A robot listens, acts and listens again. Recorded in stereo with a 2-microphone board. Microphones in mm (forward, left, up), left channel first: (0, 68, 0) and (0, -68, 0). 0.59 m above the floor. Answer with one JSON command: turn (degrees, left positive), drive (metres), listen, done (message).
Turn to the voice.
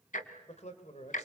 {"turn": 55}
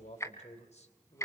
{"turn": 65}
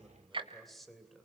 {"done": "Found it: a man speaking, straight ahead, 2 to 4 m away."}